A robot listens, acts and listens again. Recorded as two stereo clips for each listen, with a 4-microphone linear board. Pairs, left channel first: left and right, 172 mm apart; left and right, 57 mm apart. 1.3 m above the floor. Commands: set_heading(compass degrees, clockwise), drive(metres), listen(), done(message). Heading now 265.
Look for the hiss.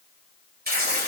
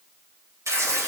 listen()
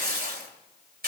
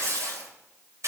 listen()
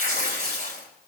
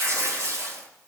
done("I can't make out a hiss, only tearing paper.")